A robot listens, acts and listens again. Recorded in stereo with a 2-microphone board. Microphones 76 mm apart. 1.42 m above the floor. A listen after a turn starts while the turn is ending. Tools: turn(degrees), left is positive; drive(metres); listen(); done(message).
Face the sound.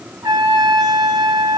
turn(degrees=-65)
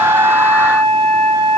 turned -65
done("Found it: a trumpet, straight ahead.")